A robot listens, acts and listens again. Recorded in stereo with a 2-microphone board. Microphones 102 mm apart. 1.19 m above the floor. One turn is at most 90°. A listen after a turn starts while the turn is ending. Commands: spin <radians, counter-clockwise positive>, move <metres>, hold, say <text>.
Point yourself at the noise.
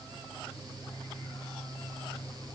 hold
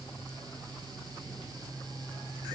hold
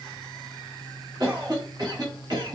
spin -0.70
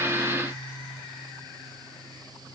hold
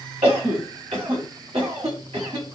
spin -1.57
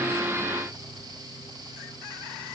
hold
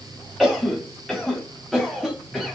say Facing the cough.